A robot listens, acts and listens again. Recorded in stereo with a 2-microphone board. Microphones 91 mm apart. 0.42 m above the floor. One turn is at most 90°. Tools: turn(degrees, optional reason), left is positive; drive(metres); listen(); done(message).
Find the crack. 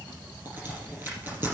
turn(degrees=-25, reason="The crack: about 25° right or 155° right.")
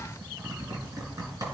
listen()
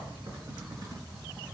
done("I heard a crack, but can't make it out now. It was about straight ahead or 130° right.")